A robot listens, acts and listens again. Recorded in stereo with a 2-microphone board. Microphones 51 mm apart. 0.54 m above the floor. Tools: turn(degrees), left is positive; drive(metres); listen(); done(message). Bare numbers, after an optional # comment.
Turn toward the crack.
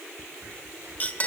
# The crack: about 65° right or 115° right.
turn(-65)
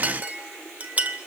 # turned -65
listen()
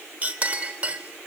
done("I heard a crack, but can't make it out now. It was about straight ahead or 50° right.")